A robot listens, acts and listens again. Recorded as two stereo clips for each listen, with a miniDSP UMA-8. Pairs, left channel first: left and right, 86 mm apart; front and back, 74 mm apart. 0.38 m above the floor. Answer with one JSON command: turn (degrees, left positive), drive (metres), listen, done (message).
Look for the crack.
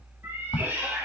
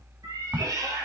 {"turn": 110}
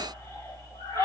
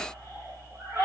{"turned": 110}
{"done": "I heard a crack from this way, but can't make it out now."}